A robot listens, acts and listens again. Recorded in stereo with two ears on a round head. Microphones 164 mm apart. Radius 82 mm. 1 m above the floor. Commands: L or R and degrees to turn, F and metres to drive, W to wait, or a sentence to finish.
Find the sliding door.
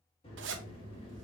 L30
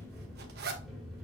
Facing the sliding door, 1 to 2 m away.